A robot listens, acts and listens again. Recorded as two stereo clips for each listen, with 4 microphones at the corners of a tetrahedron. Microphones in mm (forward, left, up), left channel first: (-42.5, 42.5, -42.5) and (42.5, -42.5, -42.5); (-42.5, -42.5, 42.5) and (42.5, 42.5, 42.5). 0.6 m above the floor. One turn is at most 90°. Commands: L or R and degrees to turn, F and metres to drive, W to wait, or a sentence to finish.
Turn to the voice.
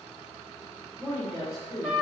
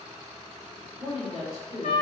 R45
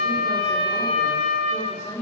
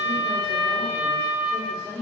R10
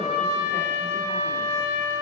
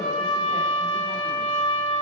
W
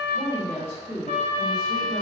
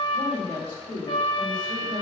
Facing the woman speaking.